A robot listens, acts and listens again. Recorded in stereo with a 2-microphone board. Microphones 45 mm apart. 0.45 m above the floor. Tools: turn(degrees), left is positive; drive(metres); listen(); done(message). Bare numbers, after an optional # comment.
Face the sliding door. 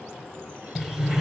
turn(-30)
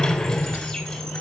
# So it is at 15° left.
turn(15)
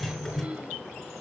done("Found it: a sliding door, straight ahead.")